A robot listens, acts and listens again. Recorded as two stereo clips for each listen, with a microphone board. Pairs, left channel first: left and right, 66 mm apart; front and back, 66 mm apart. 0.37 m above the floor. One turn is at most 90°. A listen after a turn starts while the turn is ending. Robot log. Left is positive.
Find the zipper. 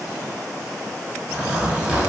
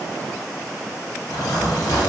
note: The zipper: 20° right.
cmd yaw -20
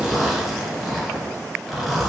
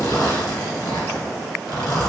end: Facing the zipper.